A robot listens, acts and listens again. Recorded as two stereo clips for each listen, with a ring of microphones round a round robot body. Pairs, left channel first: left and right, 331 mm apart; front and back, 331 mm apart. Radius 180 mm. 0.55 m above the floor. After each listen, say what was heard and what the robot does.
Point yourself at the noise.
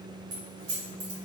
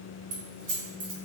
The keys jangling: 135° right. Turn 135° right.
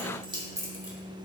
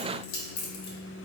The keys jangling is now 10° right. Turn 10° right.
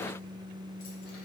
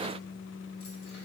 Keep listening.
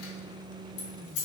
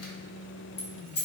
The keys jangling is now 60° left. Turn 60° left.
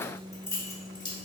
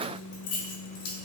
The keys jangling is now 15° left. Turn 15° left.
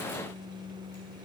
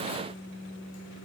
Keep listening.
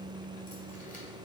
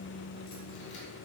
Keep listening.
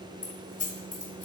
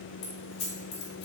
Found it: keys jangling, straight ahead.